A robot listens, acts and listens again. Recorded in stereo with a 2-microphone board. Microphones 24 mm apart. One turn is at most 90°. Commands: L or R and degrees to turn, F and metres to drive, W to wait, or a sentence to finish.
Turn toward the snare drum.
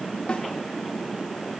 L55
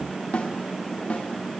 L70
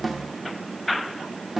Facing the snare drum.